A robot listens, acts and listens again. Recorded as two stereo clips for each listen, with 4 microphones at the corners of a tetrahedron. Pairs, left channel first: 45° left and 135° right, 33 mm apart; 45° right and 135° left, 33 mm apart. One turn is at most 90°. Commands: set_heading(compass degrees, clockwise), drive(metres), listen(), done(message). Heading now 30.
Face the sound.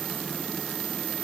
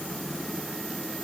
listen()
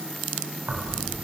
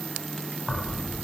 set_heading(120)
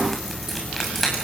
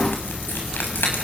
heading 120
set_heading(165)
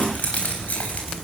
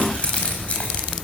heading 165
done("Facing the keys jangling.")